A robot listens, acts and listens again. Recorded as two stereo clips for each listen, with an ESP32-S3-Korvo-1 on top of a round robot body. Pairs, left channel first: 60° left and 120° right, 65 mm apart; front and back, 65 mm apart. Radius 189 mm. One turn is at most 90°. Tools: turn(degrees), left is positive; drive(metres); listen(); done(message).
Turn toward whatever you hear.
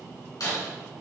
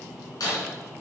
turn(degrees=30)
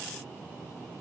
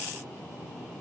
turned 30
done("I heard breaking glass from this way, but can't make it out now.")